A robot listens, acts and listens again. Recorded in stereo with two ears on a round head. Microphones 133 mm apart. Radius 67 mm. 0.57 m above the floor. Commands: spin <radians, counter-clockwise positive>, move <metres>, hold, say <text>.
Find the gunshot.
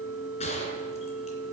spin 0.79
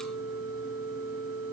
hold
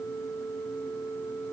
say I heard a gunshot, but can't make it out now. It was about straight ahead or 90° left.